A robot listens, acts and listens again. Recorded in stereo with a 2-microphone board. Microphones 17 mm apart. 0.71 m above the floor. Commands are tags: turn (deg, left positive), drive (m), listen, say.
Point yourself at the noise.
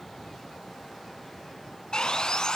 <turn deg="55"/>
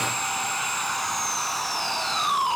<turn deg="10"/>
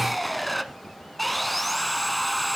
<say>Facing the sawing, 1 to 2 m away.</say>